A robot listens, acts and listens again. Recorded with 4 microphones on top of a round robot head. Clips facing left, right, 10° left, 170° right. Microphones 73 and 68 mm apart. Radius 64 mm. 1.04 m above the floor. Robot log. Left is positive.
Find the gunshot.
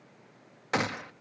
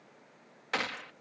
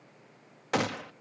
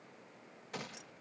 note: The gunshot: 20° left.
cmd yaw +20
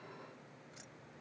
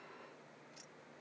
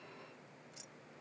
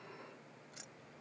end: I heard a gunshot from this way, but can't make it out now.